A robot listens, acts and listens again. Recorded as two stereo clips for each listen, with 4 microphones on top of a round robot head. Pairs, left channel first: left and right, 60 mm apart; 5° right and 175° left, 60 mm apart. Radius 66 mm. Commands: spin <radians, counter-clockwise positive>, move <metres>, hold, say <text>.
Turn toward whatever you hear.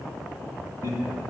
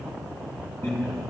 spin -0.96
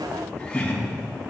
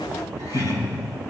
spin 0.26
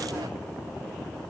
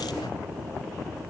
hold
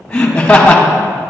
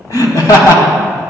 spin 0.26
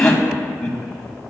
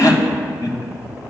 spin 0.26
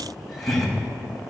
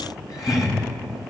say Facing the laughter.